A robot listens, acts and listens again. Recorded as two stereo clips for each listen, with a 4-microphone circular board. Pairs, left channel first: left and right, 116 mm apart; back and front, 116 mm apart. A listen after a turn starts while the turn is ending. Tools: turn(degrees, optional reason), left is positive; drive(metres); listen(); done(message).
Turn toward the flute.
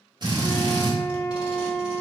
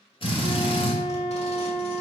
turn(degrees=-15, reason="The flute: 15° right.")
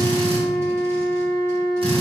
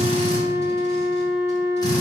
done("Found it: a flute, straight ahead, under 1 m away.")